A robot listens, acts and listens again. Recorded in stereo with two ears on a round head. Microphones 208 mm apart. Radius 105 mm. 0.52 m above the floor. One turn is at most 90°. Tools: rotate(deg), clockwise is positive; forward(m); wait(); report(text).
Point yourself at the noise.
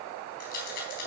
rotate(-45)
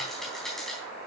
report("Found it: a rattle, straight ahead, 2 to 4 m away.")